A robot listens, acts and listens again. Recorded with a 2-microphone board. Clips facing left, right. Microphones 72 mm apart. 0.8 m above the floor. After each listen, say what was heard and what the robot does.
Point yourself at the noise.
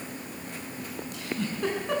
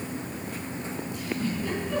Keep listening.
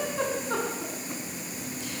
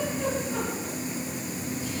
Keep listening.
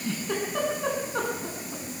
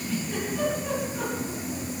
Turn 90° left.
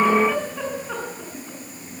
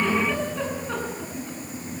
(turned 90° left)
Found it: a giggle, straight ahead, over 4 m away.